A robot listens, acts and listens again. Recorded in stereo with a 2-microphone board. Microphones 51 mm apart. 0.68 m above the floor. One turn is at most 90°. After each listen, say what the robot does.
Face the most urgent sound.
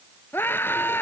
Turn 40° left.
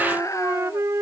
Turn 90° left.
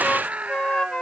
Turn 25° right.
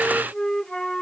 Keep listening.
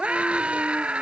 Turn 20° right.
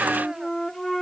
Keep listening.
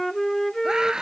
Turn 10° right.
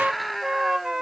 Found it: a scream, straight ahead.